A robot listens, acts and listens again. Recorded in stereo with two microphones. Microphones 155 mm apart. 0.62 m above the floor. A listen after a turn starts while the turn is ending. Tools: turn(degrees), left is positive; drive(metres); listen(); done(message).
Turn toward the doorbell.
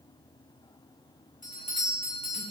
turn(degrees=55)
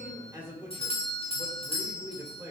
turn(degrees=45)
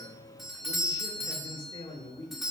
done("Facing the doorbell, 1 to 2 m away.")